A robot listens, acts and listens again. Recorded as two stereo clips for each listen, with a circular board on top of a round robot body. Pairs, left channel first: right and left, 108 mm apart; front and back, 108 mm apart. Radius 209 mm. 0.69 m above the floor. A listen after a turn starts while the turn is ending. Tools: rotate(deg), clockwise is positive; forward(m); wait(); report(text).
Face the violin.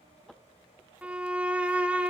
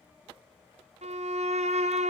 rotate(-170)
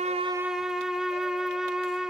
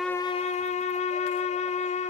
report("Found it: a violin, straight ahead.")